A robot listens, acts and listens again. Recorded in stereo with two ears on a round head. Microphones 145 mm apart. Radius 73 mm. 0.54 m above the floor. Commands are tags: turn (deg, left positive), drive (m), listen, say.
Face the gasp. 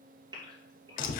<turn deg="-30"/>
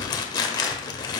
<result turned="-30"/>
<listen/>
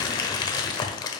<say>I heard a gasp, but can't make it out now. It was about straight ahead or 120° right.</say>